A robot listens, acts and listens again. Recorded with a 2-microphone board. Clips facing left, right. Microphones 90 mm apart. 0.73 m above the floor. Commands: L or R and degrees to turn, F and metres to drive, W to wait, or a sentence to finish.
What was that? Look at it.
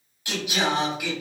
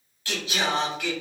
L30
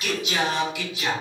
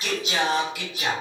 R50
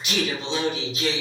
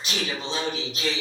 R55
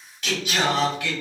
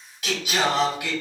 R15
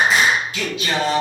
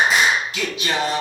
Facing the singing.